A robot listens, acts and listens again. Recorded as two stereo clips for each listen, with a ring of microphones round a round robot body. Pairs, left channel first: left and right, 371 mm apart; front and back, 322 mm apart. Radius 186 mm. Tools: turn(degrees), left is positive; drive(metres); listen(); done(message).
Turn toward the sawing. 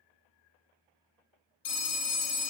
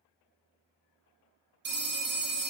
listen()
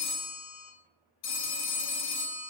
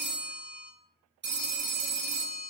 listen()
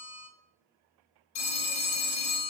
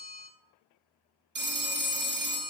done("I can't make out sawing, only a phone ringing.")